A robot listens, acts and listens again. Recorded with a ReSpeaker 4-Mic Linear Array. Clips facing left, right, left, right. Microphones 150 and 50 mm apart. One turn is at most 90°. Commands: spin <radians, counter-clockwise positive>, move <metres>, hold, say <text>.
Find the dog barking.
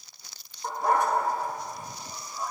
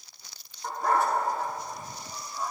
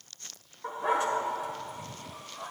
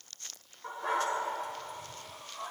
spin 0.52
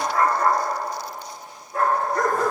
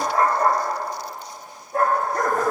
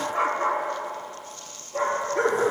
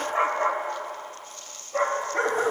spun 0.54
spin -0.87
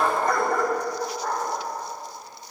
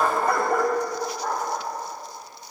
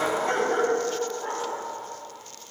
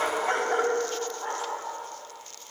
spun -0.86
spin -0.26
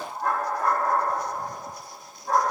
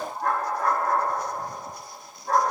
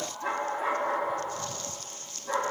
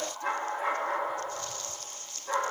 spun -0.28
say Facing the dog barking.